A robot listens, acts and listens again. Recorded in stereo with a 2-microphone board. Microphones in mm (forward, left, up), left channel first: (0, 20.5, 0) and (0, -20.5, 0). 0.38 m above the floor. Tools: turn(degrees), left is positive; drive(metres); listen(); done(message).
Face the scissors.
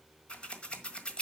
turn(degrees=30)
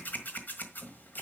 turn(degrees=115)
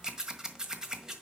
turn(degrees=-20)
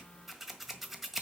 done("Found it: scissors, straight ahead.")